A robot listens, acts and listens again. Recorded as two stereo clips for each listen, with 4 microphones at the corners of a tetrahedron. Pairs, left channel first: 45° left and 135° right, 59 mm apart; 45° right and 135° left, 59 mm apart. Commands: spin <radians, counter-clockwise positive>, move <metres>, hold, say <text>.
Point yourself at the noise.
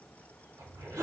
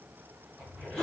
spin -2.18
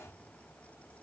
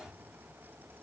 hold
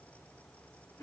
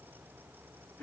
spin 0.35
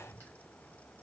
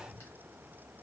hold
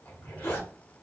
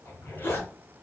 say Facing the zipper, 1 to 2 m away.